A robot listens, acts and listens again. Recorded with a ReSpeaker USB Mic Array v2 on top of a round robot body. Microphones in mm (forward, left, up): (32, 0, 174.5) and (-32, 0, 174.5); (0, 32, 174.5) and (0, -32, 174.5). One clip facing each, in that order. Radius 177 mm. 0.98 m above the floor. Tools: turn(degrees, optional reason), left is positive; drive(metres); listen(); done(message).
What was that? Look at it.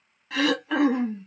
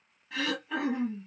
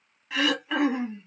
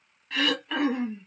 turn(degrees=10, reason="The throat clearing: 10° left.")
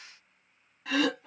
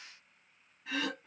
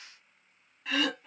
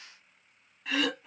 done("Found it: throat clearing, straight ahead, under 1 m away.")